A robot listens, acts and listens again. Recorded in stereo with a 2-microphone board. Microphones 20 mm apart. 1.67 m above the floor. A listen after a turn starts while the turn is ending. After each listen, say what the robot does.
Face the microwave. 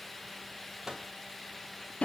Turn 30° right.
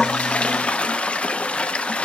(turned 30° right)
Keep listening.
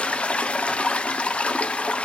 Keep listening.
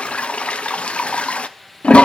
I heard a microwave, but can't make it out now. It was about straight ahead or 120° right.